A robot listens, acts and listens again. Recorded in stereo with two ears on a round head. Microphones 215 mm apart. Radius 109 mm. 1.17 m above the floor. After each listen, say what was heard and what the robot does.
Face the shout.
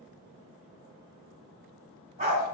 Keep listening.
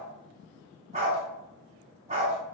Keep listening.
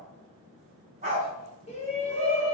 The shout: about 30° left or 150° left. Turn 30° left.
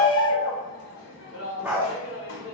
So it is at 125° left. Turn 125° left.
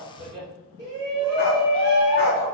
The shout is now 20° right. Turn 20° right.
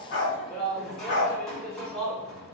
Found it: a shout, straight ahead.